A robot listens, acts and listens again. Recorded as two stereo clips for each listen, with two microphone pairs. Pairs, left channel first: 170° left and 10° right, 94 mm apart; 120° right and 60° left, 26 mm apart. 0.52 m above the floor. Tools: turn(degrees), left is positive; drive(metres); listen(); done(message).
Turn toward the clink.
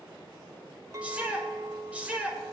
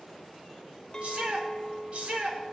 turn(degrees=-60)
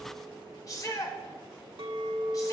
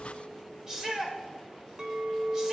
done("Found it: a clink, straight ahead, 1 to 2 m away.")